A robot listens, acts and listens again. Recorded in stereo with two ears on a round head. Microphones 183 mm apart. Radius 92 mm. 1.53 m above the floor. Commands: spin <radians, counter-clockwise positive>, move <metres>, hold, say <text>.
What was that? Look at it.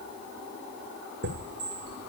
spin -0.96
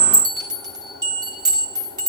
spin -0.44
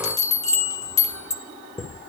spin 0.35
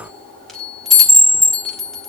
say Facing the chime.